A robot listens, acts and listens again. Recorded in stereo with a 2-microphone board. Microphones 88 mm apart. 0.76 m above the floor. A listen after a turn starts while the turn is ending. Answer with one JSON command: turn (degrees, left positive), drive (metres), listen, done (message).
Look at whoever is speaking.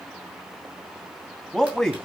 {"turn": 30}
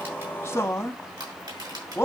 {"turn": 140}
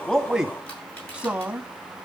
{"turn": -15}
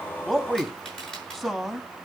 {"done": "Found it: a man speaking, straight ahead."}